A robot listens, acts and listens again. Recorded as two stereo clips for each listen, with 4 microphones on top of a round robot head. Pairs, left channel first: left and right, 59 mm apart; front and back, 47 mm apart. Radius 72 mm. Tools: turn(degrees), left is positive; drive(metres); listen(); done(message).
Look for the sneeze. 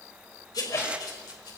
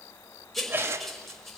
turn(degrees=140)
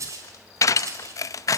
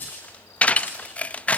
done("I heard a sneeze from this way, but can't make it out now.")